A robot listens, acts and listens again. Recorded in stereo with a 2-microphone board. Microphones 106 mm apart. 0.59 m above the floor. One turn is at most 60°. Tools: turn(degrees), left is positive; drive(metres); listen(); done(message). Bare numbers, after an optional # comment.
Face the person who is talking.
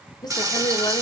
# The woman speaking: about 40° left or 140° left.
turn(40)
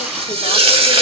listen()
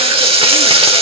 listen()
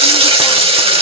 done("I heard a woman speaking, but can't make it out now. It was about straight ahead or 100° left.")